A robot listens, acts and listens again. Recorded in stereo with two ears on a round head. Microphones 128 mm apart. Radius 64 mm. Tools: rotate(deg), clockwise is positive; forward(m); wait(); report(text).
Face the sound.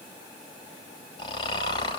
rotate(-35)
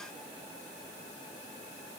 wait()
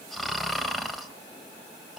report("Found it: snoring, straight ahead.")